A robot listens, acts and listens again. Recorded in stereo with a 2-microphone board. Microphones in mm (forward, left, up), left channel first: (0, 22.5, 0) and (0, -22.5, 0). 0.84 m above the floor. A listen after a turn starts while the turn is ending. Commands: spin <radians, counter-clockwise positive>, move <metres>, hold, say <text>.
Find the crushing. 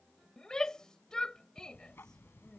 hold
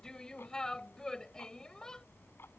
hold
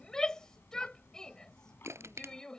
spin -1.57
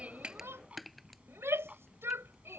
say Found it: crushing, straight ahead.